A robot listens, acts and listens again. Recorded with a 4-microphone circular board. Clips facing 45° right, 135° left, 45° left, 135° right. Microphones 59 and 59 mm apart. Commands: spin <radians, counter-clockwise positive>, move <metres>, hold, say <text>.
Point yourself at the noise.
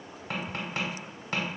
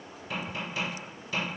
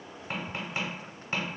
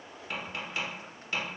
spin -0.26
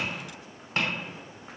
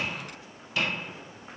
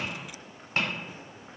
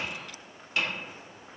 say Facing the tapping, 1 to 2 m away.